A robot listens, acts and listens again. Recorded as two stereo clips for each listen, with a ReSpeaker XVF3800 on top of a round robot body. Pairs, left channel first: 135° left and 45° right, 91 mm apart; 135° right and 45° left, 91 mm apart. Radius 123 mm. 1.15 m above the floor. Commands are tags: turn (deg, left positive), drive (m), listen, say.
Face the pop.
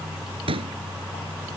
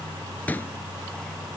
<turn deg="-65"/>
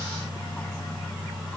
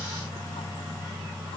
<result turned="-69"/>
<say>I heard a pop from this way, but can't make it out now.</say>